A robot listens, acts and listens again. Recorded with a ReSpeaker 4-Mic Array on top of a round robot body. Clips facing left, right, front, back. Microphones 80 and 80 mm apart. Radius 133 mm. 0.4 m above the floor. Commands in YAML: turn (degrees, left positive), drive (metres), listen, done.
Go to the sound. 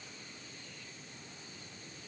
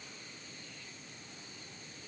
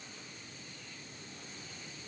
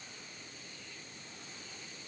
listen: true
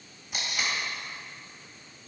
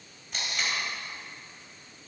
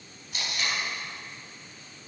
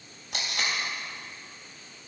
turn: 175
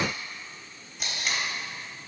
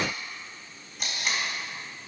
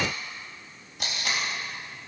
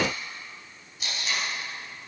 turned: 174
drive: 1.0
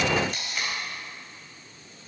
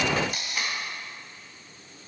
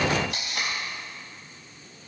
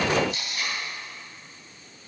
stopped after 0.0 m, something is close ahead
done: "Blocked. The tape being pulled is further on, straight ahead."